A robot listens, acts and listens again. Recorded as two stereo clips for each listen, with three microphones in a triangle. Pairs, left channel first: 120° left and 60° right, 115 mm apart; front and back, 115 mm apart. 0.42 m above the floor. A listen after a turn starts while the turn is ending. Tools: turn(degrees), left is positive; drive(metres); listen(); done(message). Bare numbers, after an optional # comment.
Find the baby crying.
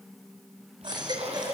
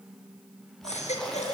# The baby crying: 10° right.
turn(-10)
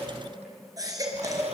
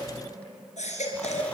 done("Facing the baby crying, over 4 m away.")